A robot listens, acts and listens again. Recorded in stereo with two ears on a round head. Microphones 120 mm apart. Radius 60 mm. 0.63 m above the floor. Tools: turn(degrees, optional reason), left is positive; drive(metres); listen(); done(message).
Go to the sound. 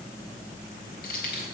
turn(degrees=90)
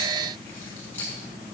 turn(degrees=15, reason="So it is at 15° left.")
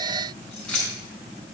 drive(metres=1.0)
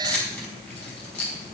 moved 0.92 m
drive(metres=1.0)
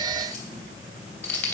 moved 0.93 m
turn(degrees=10, reason="The keys jangling is now 10° left.")
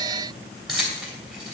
drive(metres=1.0)
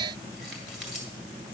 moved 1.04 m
listen()
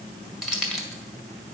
drive(metres=1.0)
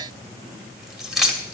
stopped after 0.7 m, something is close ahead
done("Arrived at the keys jangling, straight ahead.")